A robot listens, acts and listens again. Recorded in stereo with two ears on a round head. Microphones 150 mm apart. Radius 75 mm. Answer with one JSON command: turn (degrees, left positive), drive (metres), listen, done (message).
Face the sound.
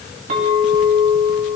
{"turn": -45}
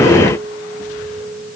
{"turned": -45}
{"turn": -90}
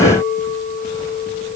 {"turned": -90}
{"turn": 10}
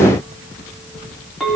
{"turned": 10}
{"done": "Facing the clink."}